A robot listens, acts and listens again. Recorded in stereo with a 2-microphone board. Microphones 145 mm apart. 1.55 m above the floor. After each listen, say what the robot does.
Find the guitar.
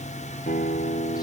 Turn 90° left.
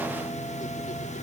Keep listening.
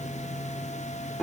Found it: a guitar, straight ahead.